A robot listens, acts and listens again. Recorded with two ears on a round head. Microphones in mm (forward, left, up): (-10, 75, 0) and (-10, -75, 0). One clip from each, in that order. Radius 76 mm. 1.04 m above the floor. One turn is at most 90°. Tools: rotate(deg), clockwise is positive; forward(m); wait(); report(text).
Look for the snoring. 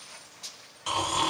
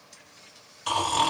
rotate(30)
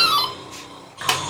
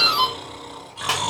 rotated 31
rotate(90)
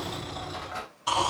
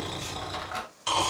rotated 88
rotate(55)
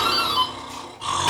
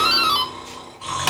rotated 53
report("Found it: snoring, straight ahead.")